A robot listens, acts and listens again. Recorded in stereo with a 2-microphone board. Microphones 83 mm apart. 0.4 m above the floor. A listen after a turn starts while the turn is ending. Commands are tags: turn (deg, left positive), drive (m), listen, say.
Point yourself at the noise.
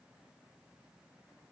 <listen/>
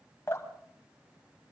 <turn deg="35"/>
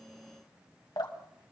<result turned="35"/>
<turn deg="105"/>
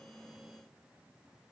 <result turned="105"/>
<listen/>
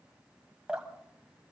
<turn deg="-10"/>
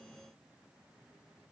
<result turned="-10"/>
<listen/>
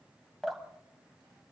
<say>Facing the dripping.</say>